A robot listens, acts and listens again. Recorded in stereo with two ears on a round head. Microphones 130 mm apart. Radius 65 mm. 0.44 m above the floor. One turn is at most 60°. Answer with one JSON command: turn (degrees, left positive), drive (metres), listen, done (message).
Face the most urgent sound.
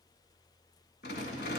{"listen": true}
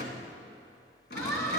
{"turn": 20}
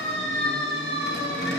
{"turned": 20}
{"turn": 60}
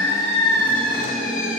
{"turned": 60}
{"turn": 60}
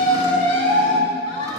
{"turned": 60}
{"turn": 40}
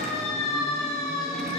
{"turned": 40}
{"done": "Found it: a siren, straight ahead, over 4 m away."}